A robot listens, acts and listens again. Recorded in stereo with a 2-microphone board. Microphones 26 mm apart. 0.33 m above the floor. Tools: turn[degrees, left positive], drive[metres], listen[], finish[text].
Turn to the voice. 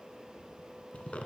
Action: listen[]
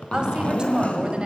Thought: The woman speaking: about 40° right or 140° right.
Action: turn[-40]
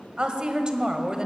Thought: So it is at 30° right.
Action: turn[-30]
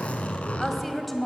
Action: finish[Found it: a woman speaking, straight ahead.]